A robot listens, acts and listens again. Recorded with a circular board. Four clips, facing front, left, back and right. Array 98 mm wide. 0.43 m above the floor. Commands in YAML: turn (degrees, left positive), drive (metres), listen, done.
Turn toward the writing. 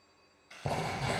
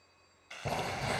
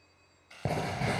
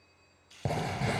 turn: -145
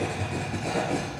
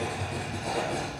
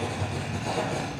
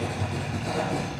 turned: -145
done: "Facing the writing, over 4 m away."